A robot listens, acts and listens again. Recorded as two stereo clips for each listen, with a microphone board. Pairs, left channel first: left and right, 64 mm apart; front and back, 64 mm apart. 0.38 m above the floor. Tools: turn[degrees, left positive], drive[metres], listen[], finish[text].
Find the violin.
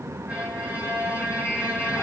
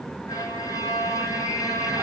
Thought: The violin: 25° right.
Action: turn[-25]
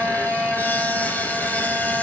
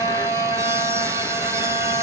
Thought: The violin is now 10° right.
Action: turn[-10]
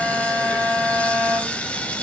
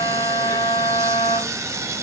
Action: finish[Facing the violin.]